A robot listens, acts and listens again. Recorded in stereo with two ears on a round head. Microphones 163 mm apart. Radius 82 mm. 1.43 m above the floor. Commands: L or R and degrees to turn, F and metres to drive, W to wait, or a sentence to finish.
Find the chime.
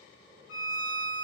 W
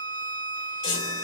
L70
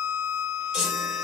Facing the chime.